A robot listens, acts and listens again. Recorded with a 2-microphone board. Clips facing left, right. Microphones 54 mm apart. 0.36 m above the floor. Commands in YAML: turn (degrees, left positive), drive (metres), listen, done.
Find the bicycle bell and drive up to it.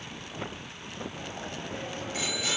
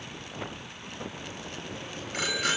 turn: -55
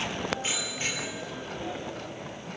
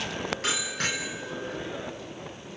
turn: -70
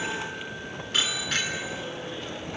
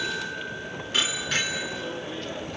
drive: 1.0
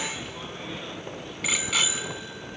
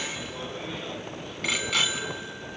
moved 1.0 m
drive: 1.0
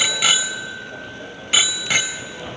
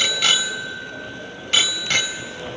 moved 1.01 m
turn: 10
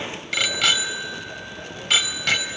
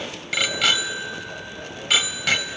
drive: 1.0
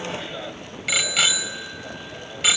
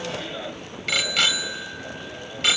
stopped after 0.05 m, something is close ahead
done: "I am next to the bicycle bell."